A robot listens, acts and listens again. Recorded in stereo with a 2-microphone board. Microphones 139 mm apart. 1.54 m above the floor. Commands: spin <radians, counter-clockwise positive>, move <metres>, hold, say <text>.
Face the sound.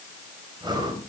spin -0.61
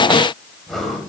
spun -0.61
say Found it: breathing, straight ahead.